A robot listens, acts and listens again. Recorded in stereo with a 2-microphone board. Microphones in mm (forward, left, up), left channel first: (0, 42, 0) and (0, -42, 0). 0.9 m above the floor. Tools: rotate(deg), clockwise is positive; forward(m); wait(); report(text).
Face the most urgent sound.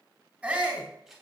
rotate(30)
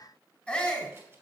rotate(-15)
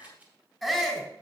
report("Facing the shout, 2 to 4 m away.")